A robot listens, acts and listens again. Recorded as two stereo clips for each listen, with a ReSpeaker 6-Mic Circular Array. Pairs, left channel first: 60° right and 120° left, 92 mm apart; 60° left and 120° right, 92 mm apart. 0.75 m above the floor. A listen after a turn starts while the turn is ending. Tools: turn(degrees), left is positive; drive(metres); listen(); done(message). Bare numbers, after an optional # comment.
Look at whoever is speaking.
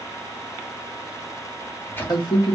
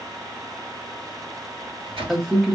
# The man speaking: 25° right.
turn(-25)
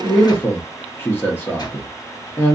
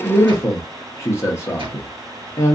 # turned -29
done("Facing the man speaking.")